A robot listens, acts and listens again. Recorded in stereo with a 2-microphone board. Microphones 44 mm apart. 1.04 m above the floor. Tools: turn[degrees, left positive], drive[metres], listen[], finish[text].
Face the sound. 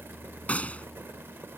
Thought: The gunshot: about 35° left or 145° left.
Action: turn[35]
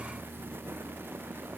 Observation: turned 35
Action: listen[]
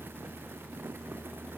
Action: finish[I heard a gunshot, but can't make it out now. It was about straight ahead or 110° left.]